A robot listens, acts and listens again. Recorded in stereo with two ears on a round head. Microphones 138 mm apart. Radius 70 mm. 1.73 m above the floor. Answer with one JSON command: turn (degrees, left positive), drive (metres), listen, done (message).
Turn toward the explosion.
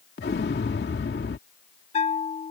{"turn": 70}
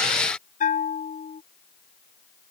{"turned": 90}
{"listen": true}
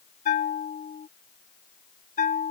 {"done": "I heard an explosion, but can't make it out now. It was about 20° right or 20° left."}